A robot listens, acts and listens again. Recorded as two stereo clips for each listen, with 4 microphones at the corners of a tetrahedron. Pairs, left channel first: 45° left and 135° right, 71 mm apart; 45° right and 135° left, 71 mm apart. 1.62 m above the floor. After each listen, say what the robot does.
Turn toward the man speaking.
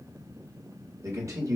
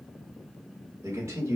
Turn 175° right.
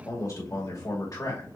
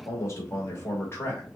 Turn 15° left.
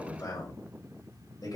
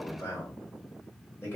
Turn 10° left.
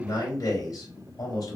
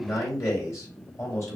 Found it: a man speaking, straight ahead, 2 to 4 m away.